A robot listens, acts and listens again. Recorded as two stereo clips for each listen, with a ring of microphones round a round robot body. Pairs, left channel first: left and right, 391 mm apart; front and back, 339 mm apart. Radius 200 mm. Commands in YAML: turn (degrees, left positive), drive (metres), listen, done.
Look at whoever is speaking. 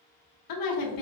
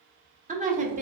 turn: 115
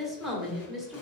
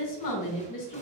done: "Facing the woman speaking."